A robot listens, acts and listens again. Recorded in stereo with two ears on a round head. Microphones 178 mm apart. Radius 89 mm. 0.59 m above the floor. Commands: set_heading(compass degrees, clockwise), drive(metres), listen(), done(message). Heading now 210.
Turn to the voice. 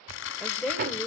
set_heading(180)
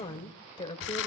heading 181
set_heading(26)
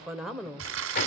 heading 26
done("Found it: a woman speaking, straight ahead.")